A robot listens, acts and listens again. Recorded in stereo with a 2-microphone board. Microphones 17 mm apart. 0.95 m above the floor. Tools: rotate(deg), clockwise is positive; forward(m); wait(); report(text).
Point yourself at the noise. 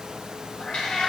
rotate(-50)
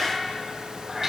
rotate(25)
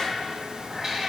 rotate(20)
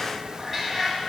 rotate(10)
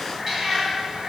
rotate(10)
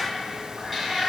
report("Facing the cat meowing, 2 to 4 m away.")